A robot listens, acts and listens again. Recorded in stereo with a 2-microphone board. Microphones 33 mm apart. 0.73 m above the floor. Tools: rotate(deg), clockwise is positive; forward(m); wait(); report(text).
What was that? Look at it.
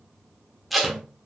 rotate(-30)
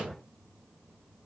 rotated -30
wait()
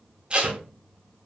rotate(30)
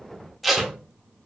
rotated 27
report("Found it: tape being pulled, straight ahead.")